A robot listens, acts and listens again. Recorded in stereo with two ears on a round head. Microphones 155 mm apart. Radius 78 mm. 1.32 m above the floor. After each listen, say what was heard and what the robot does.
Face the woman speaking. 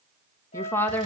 Turn 30° left.
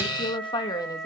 So it is at 155° left. Turn 155° left.
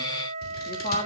The woman speaking is now 45° left. Turn 45° left.
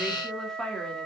Found it: a woman speaking, straight ahead.